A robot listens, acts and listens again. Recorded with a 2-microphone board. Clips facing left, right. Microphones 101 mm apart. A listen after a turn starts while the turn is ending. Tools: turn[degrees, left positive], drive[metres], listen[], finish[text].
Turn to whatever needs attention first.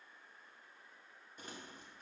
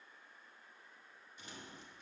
Action: listen[]
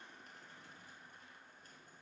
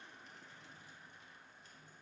Action: listen[]
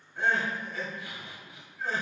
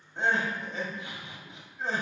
Thought: The crying: about 25° right or 155° right.
Action: turn[-25]
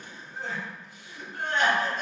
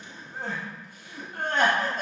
Thought: So it is at 130° right.
Action: turn[-130]
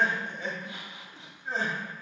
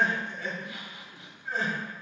Thought: The crying is now 30° left.
Action: turn[30]
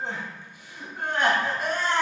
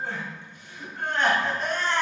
Thought: The crying is now 10° left.
Action: turn[10]
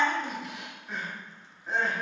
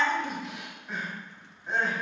Action: finish[Facing the crying.]